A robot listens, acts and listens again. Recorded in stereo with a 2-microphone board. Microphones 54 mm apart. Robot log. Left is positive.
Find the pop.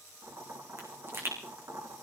note: The pop: about 45° right or 135° right.
cmd yaw -45
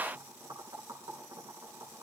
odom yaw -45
cmd idle
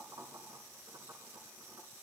end: I heard a pop, but can't make it out now. It was about straight ahead or 90° right.